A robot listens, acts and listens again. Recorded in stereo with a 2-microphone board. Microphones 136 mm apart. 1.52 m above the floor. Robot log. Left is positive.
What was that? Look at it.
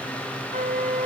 note: The flute: about 65° right or 115° right.
cmd yaw -65
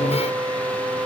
note: So it is at 25° right.
cmd yaw -25
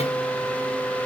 note: The flute is now 10° left.
cmd yaw +10
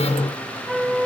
end: Facing the flute, 1 to 2 m away.